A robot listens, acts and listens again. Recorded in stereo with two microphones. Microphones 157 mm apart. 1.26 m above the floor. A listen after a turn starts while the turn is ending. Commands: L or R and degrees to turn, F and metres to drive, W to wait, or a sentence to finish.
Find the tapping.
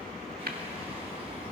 R75
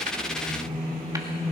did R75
W
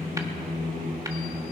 W
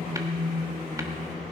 I heard tapping, but can't make it out now. It was about straight ahead or 30° right.